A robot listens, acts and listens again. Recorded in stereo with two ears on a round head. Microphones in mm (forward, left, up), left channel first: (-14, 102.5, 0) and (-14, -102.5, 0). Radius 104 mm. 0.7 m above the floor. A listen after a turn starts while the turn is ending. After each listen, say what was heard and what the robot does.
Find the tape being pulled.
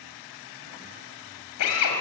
Keep listening.
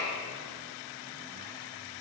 Keep listening.
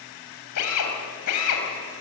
I can't make out tape being pulled to turn to.